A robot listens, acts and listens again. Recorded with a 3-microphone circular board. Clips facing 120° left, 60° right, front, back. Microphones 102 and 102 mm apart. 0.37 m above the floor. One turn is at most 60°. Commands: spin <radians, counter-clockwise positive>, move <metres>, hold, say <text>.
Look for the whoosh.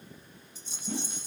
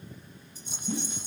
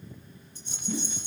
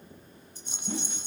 spin 1.05
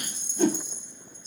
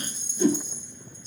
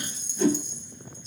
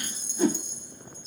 spin 1.05
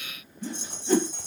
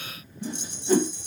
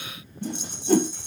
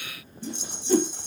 spin 0.35
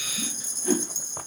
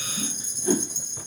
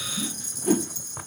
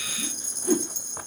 say Found it: a whoosh, straight ahead, 1 to 2 m away.